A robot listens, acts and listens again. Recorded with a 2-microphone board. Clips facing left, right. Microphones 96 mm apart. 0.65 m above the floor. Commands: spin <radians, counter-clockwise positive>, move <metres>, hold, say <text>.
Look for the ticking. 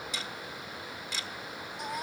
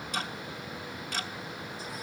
spin -0.96
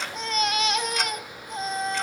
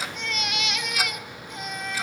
hold
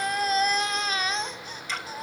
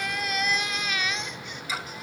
say Facing the ticking, 1 to 2 m away.